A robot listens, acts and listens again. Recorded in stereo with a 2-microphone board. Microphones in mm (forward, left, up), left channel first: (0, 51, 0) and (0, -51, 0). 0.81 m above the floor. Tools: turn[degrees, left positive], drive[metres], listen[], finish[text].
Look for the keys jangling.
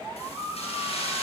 Action: turn[90]
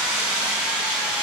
Thought: So it is at 10° right.
Action: turn[-10]
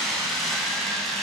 Action: finish[Found it: keys jangling, straight ahead, 2 to 4 m away.]